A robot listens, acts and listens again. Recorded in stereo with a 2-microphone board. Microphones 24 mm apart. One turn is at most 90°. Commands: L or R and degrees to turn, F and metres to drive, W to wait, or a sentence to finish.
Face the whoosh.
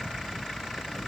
W
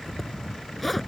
W
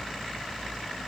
I can't make out a whoosh, only a zipper.